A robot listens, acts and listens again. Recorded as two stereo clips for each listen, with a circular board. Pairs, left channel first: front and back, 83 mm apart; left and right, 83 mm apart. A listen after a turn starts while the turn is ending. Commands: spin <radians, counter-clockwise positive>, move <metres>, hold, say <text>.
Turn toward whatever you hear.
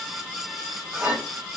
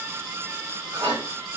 spin -2.09
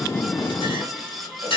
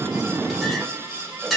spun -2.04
say Facing the clink, 1 to 2 m away.